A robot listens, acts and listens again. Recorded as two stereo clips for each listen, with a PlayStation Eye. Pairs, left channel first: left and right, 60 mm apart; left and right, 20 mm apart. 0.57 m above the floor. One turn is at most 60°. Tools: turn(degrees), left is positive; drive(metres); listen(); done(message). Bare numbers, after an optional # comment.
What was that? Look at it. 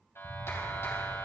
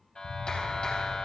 # The clap: about 50° left or 130° left.
turn(50)
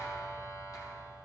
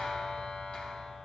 # So it is at 80° left.
turn(60)
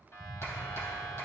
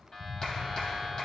# The clap is now 45° left.
turn(45)
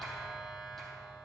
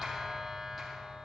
done("Facing the clap.")